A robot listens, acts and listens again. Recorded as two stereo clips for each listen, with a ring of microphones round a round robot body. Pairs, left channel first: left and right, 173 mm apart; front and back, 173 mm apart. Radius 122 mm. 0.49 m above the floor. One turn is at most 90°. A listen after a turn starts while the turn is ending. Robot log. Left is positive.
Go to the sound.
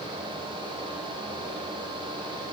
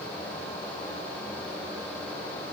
cmd idle
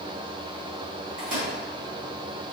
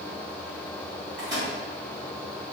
note: The microwave: 110° right.
cmd yaw -90
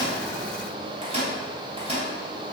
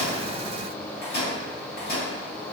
note: The microwave is now 40° right.
cmd yaw -40
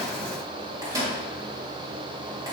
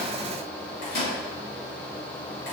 note: The microwave is now 20° right.
cmd yaw -20
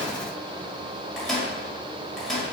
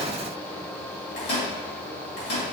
cmd fwd 1.0
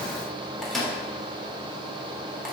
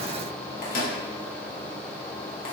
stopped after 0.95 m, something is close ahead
end: Arrived at the microwave, straight ahead.